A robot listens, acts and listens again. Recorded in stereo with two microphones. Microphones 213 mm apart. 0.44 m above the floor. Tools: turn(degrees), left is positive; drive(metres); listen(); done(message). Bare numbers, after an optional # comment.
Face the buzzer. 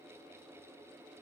listen()
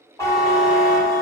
turn(30)
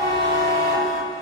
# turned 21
# So it is at 145° left.
turn(145)
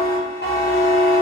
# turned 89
# The buzzer is now 55° left.
turn(55)
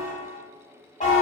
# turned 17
# The buzzer is now 40° left.
turn(40)
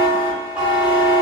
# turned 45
done("Facing the buzzer, under 1 m away.")